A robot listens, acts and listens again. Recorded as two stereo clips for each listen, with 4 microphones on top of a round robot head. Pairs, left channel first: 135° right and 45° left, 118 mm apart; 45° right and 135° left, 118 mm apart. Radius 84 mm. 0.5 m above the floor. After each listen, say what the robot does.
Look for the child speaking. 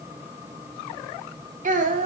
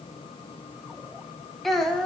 Turn 45° left.
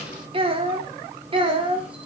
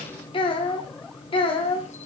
Facing the child speaking, 2 to 4 m away.